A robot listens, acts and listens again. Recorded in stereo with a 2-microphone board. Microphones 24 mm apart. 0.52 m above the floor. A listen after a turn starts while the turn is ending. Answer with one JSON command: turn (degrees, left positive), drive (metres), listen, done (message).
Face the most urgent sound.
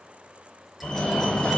{"turn": 40}
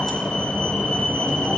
{"turn": 95}
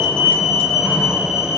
{"done": "Found it: a fire alarm, straight ahead, 2 to 4 m away."}